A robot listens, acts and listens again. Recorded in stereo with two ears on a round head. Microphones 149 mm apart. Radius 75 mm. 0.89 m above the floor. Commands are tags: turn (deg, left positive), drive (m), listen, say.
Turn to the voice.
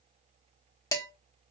<listen/>
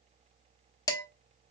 <listen/>
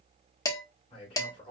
<turn deg="35"/>
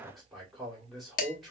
<say>Facing the man speaking.</say>